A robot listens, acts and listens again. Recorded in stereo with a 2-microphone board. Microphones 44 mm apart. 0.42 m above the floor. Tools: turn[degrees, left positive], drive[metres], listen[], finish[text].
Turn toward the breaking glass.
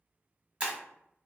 Thought: The breaking glass: about 25° right or 155° right.
Action: turn[-25]
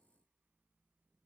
Action: listen[]
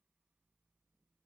Action: finish[I heard breaking glass, but can't make it out now. It was about straight ahead or 130° right.]